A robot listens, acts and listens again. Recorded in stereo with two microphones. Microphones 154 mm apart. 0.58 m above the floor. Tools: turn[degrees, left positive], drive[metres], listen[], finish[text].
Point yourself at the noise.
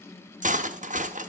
Thought: The cutlery clinking: about 55° right or 125° right.
Action: turn[-55]
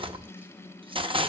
Thought: So it is at 45° right.
Action: turn[-45]
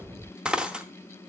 Action: finish[Found it: cutlery clinking, straight ahead, under 1 m away.]